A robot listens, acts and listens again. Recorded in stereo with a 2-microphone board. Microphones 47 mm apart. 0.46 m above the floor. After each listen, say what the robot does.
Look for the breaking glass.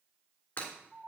Turn 45° left.
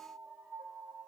Keep listening.
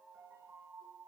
I heard breaking glass, but can't make it out now. It was about straight ahead or 90° left.